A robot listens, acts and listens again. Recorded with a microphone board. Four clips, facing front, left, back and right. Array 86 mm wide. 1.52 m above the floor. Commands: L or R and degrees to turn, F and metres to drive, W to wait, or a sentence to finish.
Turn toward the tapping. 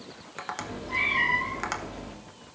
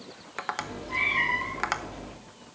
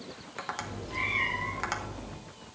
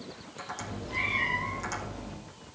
L85
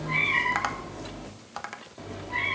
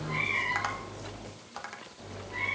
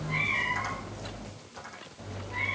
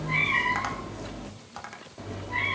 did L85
Facing the tapping, 1 to 2 m away.